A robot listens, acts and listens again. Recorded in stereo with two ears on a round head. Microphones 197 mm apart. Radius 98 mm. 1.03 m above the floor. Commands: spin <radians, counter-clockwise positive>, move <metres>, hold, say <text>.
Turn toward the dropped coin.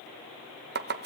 hold
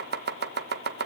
hold
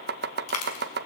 spin 1.57
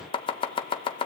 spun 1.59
say I heard a dropped coin from this way, but can't make it out now.